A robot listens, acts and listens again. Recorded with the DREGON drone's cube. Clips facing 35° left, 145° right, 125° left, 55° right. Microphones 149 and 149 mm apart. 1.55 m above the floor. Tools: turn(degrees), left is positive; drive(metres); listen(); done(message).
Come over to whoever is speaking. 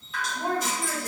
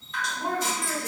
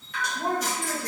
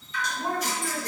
turn(degrees=85)
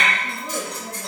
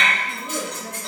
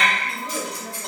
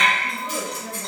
turn(degrees=10)
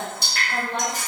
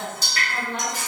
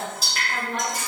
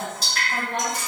drive(metres=1.0)
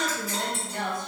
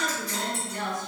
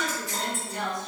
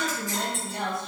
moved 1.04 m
drive(metres=1.0)
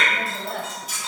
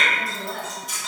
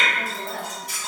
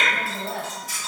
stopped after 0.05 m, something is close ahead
turn(degrees=10)
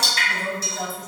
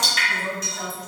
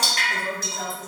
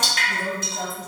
done("I am next to the woman speaking.")